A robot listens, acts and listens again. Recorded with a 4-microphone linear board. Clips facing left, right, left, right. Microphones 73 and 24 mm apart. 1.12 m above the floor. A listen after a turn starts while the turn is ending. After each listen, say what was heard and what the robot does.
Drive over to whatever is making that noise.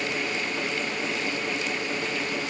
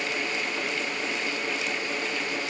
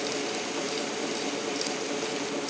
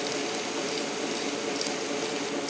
Keep listening.
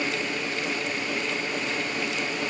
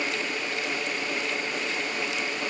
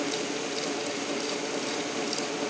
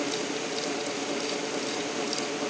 Keep listening.
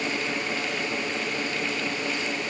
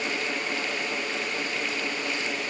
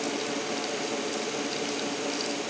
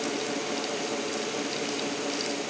I can't make out anything.